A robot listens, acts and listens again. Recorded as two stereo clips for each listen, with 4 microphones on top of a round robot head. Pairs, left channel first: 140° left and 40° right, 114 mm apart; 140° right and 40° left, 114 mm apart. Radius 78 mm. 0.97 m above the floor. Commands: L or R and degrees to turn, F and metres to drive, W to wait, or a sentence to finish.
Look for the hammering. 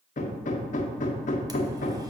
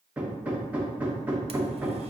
L120
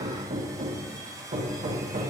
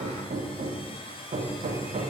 Facing the hammering.